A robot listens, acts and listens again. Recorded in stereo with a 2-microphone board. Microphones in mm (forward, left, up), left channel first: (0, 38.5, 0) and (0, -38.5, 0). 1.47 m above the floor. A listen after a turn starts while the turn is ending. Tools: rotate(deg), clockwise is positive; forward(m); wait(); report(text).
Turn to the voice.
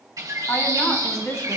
rotate(-40)
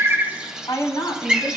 rotate(-95)
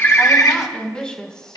rotate(-10)
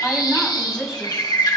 rotate(10)
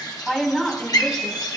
report("Facing the woman speaking.")